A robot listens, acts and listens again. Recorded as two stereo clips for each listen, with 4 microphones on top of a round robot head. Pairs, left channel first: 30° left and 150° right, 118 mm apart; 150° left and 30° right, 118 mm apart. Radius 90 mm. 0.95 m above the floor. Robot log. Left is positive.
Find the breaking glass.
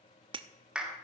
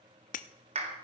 note: The breaking glass: 160° left.
cmd yaw +160
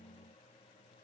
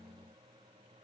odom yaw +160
end: I heard breaking glass from this way, but can't make it out now.